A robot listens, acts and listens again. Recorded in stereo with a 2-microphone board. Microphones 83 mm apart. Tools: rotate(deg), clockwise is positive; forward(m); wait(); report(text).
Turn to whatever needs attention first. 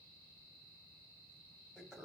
wait()
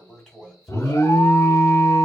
rotate(-35)
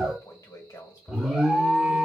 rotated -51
report("Facing the alarm, under 1 m away.")